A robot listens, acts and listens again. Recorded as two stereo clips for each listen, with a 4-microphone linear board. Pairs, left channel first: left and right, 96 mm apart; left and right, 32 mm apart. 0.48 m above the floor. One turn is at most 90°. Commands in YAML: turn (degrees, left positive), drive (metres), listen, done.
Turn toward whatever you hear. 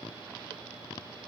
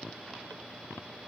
listen: true
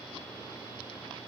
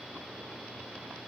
listen: true
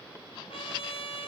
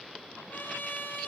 turn: 70
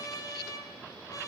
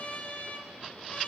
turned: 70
turn: 40
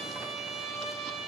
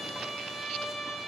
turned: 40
done: "Found it: a trumpet, straight ahead."